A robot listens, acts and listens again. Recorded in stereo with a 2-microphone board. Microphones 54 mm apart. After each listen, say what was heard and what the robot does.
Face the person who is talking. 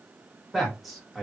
Turn 30° left.
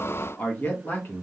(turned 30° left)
So it is at 140° left. Turn 140° left.
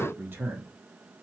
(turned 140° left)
The man speaking is now 40° right. Turn 40° right.
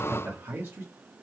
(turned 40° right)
The man speaking is now 40° right. Turn 40° right.
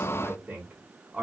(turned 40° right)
The man speaking is now 15° right. Turn 15° right.
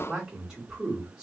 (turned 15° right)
Found it: a man speaking, straight ahead, 1 to 2 m away.